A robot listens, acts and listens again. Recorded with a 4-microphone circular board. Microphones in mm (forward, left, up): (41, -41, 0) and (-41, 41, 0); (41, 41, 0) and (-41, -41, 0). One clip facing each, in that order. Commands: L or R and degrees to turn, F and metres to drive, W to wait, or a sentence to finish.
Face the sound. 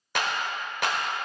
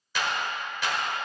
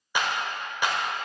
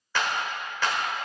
R25
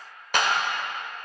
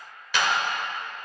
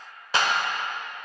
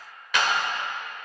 R10
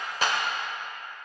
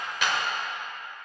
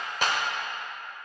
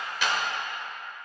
Facing the clap.